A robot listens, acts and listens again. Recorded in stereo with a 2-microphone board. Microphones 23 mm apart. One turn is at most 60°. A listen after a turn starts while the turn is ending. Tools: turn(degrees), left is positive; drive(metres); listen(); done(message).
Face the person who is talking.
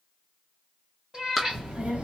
turn(degrees=-60)
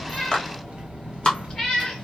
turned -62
turn(degrees=-50)
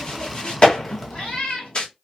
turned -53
done("Found it: a child speaking, straight ahead.")